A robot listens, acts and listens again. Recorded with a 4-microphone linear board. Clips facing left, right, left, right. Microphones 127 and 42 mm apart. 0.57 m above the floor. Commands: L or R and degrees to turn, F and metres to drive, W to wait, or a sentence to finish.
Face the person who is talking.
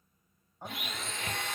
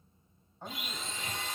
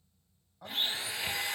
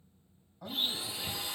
L30
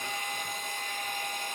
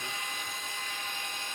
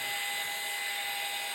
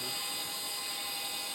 W
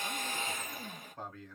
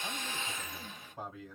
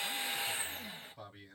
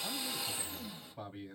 R15
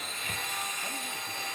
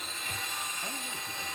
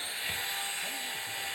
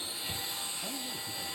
W
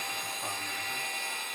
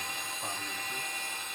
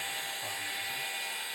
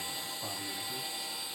W
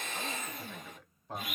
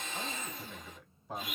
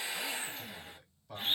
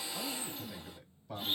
Facing the man speaking.